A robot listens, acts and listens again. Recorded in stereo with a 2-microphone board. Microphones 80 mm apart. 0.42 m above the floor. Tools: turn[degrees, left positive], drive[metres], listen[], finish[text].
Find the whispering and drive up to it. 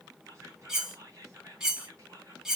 Thought: The whispering: about 40° right or 140° right.
Action: turn[-40]
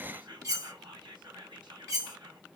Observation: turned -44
Thought: So it is at 95° right.
Action: turn[-95]
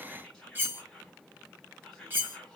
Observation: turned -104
Thought: The whispering is now 10° left.
Action: turn[10]
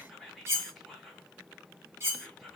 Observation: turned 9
Action: drive[1.0]
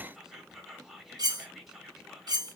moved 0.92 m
Action: drive[1.0]
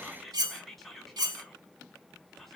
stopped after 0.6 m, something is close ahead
Action: finish[I am next to the whispering.]